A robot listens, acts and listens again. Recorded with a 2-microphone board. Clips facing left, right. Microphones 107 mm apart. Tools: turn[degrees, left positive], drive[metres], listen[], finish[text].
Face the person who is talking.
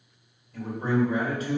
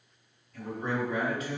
Thought: The man speaking: about 35° left or 145° left.
Action: turn[35]
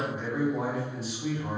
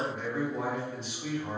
Action: finish[Facing the man speaking, 1 to 2 m away.]